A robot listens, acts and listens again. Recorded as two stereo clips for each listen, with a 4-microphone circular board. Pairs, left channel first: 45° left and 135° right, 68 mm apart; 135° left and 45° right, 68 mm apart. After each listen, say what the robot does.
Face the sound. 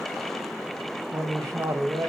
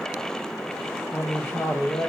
Turn 180° left.
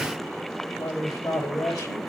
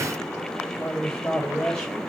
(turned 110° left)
Turn 60° left.
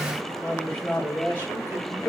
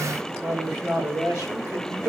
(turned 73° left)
Turn 15° right.
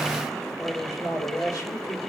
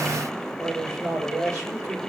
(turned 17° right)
Facing the man speaking.